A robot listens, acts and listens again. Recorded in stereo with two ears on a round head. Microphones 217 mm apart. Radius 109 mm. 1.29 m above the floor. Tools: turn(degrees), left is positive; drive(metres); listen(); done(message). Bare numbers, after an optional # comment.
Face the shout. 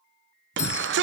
# The shout: about 50° right or 130° right.
turn(-50)
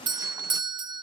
listen()
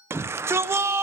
# So it is at 15° right.
turn(-15)
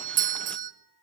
listen()
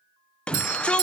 done("Found it: a shout, straight ahead.")